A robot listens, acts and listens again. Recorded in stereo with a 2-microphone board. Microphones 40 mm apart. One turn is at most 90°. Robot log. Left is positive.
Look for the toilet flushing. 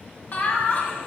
cmd idle
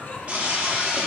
note: The toilet flushing: about 30° right or 150° right.
cmd yaw -30
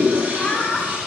note: So it is at 120° right.
cmd yaw -90
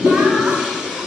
note: The toilet flushing is now 15° right.
cmd yaw -15
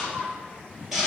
end: Found it: a toilet flushing, straight ahead.